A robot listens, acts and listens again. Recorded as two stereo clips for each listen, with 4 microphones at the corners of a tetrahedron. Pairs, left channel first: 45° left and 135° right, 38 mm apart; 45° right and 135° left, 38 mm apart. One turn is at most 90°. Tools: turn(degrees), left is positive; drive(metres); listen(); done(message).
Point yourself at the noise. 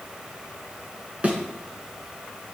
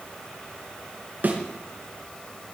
turn(degrees=90)
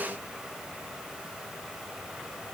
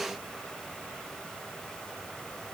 turn(degrees=80)
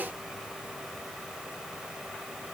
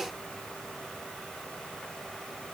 done("Facing where the thud came from. I can't hear it now.")